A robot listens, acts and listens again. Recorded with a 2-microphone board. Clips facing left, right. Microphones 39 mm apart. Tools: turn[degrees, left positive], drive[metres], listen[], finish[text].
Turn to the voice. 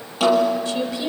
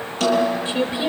Thought: The woman speaking: about 30° right or 150° right.
Action: turn[-30]
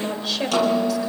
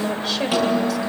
Action: finish[Facing the woman speaking, 2 to 4 m away.]